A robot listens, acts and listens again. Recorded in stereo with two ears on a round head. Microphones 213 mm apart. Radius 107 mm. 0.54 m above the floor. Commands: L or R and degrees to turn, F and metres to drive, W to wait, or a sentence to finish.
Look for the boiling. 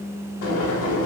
L55
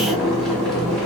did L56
Found it: boiling, straight ahead.